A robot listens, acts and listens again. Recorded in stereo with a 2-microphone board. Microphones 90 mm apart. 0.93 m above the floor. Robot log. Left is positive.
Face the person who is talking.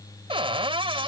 cmd idle
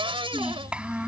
cmd yaw -30
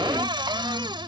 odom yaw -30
cmd idle
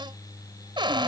cmd idle
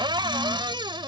end: I heard a child speaking, but can't make it out now. It was about 15° left or 135° right.